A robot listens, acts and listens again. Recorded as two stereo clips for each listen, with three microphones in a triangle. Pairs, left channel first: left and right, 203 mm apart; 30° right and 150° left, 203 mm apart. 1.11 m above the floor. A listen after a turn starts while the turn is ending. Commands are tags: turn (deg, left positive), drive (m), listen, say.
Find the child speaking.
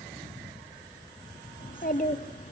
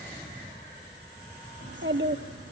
<turn deg="140"/>
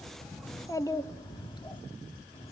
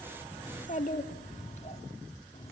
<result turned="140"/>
<turn deg="25"/>
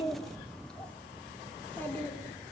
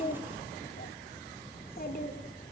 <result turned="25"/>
<turn deg="10"/>
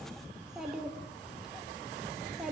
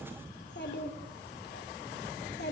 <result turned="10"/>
<say>Facing the child speaking.</say>